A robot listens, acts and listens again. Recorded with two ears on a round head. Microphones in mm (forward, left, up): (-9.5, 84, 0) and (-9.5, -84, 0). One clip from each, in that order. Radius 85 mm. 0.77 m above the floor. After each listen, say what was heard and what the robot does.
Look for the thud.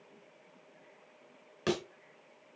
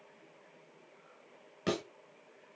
The thud: about 35° left or 145° left. Turn 35° left.
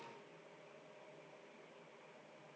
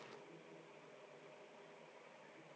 Keep listening.
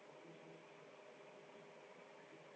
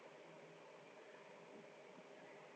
I heard a thud, but can't make it out now. It was about straight ahead or 110° left.